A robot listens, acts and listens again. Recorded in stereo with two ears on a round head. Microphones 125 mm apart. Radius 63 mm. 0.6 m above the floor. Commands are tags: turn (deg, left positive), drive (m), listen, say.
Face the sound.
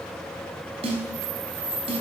<turn deg="-40"/>
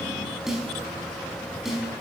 <say>Facing the snare drum, over 4 m away.</say>